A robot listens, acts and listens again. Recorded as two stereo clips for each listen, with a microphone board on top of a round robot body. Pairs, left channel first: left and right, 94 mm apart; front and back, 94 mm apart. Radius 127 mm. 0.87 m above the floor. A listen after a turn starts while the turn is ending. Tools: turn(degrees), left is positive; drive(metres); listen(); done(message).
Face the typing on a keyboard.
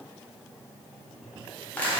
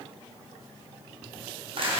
listen()
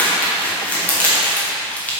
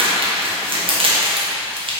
listen()
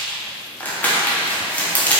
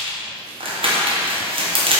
done("I can't make out typing on a keyboard to turn to.")